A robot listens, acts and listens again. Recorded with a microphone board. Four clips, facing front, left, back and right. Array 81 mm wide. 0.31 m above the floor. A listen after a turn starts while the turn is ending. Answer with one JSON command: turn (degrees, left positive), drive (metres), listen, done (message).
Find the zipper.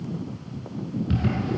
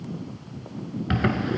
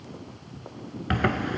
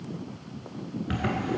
{"turn": 160}
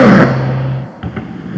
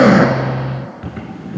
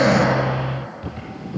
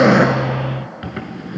{"turn": -20}
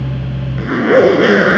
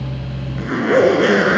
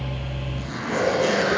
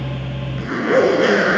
{"done": "Found it: a zipper, straight ahead, under 1 m away."}